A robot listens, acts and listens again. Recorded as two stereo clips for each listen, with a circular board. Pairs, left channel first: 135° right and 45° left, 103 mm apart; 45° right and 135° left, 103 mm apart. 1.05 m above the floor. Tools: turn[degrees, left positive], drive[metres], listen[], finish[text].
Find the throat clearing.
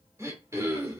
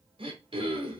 Thought: The throat clearing: 110° left.
Action: turn[110]
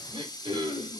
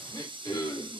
Thought: The throat clearing is now 10° left.
Action: turn[10]
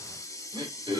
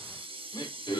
Action: finish[Facing the throat clearing.]